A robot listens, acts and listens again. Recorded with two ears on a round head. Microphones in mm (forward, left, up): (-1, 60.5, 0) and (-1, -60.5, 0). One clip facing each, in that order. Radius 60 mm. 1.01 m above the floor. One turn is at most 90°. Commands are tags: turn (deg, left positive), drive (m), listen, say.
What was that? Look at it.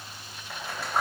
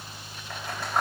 <turn deg="30"/>
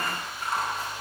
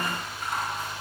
<listen/>
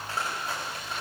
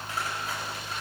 <listen/>
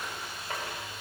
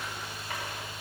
<say>I heard scissors, but can't make it out now. It was about 25° right or 145° left.</say>